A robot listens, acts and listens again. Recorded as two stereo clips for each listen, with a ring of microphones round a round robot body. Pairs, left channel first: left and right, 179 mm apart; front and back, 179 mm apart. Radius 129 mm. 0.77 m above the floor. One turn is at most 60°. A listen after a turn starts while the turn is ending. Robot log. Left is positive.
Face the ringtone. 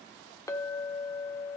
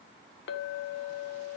cmd idle
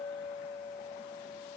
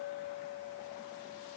cmd idle
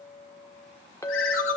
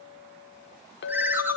note: The ringtone: 100° left.
cmd yaw +60
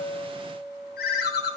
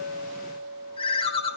note: The ringtone is now 60° left.
cmd yaw +60
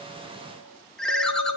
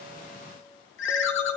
end: Found it: a ringtone, straight ahead.